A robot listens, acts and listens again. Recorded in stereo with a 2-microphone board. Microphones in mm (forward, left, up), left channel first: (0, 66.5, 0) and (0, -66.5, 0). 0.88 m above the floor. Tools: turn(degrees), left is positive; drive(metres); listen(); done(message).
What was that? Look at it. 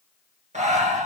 turn(degrees=-65)
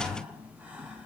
turn(degrees=-15)
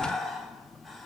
done("Facing the breathing, 1 to 2 m away.")